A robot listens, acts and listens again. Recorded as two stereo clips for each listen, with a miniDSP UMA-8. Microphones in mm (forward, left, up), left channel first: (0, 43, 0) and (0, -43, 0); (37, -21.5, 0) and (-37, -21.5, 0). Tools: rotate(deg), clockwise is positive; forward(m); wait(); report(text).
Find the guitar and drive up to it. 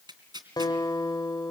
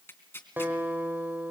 rotate(-120)
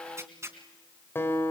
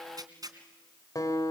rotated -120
rotate(-30)
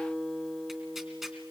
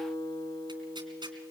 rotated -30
forward(1.0)
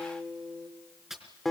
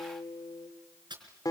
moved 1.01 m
forward(1.0)
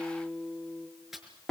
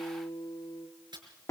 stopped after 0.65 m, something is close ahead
report("I am next to the guitar.")